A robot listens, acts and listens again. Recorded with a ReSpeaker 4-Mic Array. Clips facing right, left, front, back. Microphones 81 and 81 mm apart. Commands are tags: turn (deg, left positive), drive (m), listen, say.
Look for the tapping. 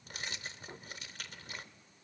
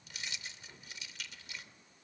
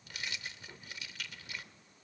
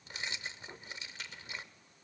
<listen/>
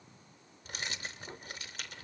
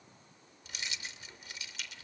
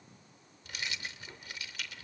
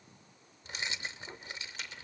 <listen/>
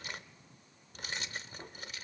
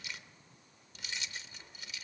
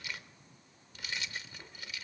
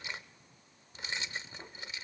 <say>I can't make out tapping to turn to.</say>